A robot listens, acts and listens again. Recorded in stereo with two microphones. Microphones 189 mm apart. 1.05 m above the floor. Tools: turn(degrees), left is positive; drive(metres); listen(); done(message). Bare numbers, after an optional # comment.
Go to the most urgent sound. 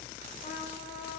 listen()
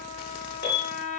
# The alarm: about 55° left or 125° left.
turn(55)
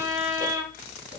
listen()
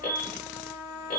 # So it is at 55° left.
turn(55)
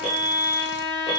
drive(1.0)
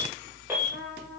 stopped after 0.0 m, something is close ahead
# The alarm is now 10° right.
turn(-10)
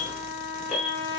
done("Blocked. The alarm is further on, straight ahead.")